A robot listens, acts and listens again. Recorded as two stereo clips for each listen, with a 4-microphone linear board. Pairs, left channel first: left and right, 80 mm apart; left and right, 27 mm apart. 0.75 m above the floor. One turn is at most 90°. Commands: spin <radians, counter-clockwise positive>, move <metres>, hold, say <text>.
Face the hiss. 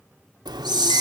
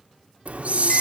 spin -1.05
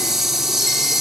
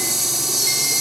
say Found it: a hiss, straight ahead.